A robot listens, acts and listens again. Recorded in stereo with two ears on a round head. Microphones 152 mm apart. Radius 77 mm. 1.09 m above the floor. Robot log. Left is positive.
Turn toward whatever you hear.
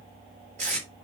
note: The tape being pulled: about 40° right or 140° right.
cmd yaw -40
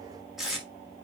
end: Found it: tape being pulled, straight ahead.